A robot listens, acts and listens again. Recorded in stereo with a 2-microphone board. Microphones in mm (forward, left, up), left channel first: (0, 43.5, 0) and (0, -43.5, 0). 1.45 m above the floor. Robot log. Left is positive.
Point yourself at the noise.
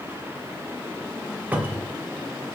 note: The cupboard door: about 15° right or 165° right.
cmd yaw -15
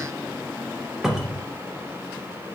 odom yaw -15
end: Facing the cupboard door.